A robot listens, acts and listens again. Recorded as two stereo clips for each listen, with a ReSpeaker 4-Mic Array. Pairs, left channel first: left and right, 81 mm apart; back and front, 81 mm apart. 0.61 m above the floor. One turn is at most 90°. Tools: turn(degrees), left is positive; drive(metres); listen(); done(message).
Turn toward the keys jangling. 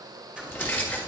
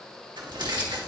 turn(degrees=15)
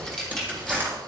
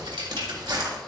done("Found it: keys jangling, straight ahead.")